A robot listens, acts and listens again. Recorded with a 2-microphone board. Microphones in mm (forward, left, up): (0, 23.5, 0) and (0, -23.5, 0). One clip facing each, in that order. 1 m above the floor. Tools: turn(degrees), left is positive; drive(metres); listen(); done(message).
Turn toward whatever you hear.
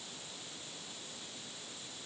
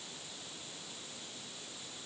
listen()
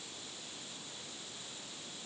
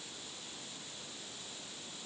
listen()
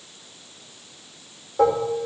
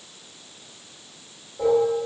turn(degrees=90)
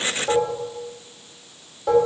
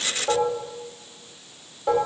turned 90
done("Facing the dishes clattering.")